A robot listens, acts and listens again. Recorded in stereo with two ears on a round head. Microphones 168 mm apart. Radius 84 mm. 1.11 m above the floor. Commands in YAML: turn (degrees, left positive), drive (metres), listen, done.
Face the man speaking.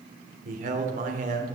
turn: -45
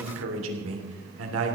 turn: -85
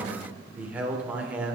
turn: -10
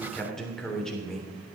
done: "Found it: a man speaking, straight ahead."